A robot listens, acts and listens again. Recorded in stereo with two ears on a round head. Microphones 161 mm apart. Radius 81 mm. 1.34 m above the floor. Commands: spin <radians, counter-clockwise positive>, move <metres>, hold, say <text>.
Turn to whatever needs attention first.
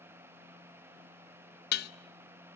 hold
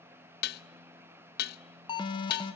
spin 0.44
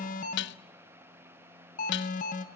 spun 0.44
spin 2.18
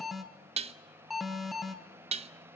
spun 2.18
say Found it: an alarm, straight ahead.